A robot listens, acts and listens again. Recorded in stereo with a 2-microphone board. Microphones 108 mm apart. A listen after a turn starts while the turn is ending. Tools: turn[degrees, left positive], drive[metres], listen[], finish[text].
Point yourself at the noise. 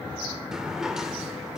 Action: turn[-30]
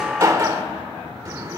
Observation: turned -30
Thought: So it is at 145° right.
Action: turn[-145]
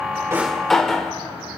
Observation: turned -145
Action: finish[Facing the drawer.]